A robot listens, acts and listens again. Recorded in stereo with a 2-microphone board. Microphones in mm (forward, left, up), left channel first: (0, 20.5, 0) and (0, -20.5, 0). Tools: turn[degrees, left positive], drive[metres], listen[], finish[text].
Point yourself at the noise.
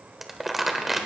Action: turn[-30]
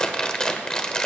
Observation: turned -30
Thought: So it is at 25° left.
Action: turn[25]
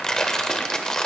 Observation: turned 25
Thought: The crumpling is now 20° left.
Action: turn[20]
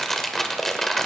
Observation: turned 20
Thought: The crumpling is now 10° left.
Action: turn[10]
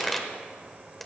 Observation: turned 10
Action: finish[Found it: crumpling, straight ahead.]